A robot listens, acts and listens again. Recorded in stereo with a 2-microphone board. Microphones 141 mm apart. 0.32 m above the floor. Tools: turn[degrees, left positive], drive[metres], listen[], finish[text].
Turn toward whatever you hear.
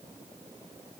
Action: listen[]
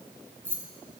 Action: turn[-30]
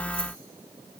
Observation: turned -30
Action: listen[]
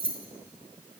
Thought: So it is at 135° right.
Action: turn[-135]
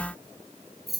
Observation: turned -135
Action: finish[Facing the keys jangling, 1 to 2 m away.]